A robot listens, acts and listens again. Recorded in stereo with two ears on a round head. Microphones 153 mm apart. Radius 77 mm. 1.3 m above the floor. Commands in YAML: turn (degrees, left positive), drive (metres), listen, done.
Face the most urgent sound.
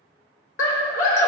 turn: 75
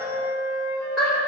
done: "Found it: a scream, straight ahead."